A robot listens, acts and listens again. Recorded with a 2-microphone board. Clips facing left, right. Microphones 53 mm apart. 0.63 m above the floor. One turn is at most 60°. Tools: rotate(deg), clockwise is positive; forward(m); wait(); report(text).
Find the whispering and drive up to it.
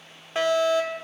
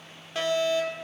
wait()
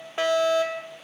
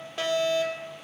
wait()
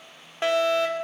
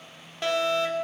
report("I can't make out whispering to turn to.")